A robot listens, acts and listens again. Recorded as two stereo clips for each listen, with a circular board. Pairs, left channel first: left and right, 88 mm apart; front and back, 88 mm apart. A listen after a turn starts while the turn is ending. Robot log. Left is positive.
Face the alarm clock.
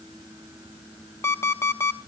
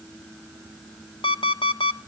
note: The alarm clock: 30° left.
cmd yaw +30
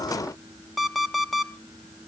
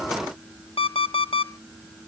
end: Found it: an alarm clock, straight ahead.